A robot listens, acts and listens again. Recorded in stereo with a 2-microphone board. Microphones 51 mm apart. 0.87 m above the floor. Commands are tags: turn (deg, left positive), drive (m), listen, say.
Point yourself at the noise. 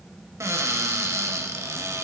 <turn deg="-70"/>
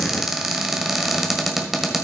<say>Facing the cupboard door.</say>